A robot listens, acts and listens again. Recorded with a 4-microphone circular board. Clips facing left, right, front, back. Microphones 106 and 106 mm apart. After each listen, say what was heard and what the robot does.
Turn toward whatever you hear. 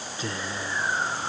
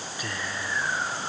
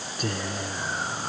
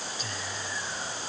The whispering: 25° left. Turn 25° left.
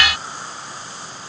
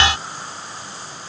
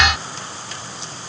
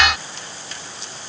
Keep listening.
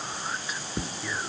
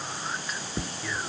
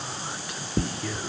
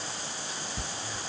Found it: whispering, straight ahead.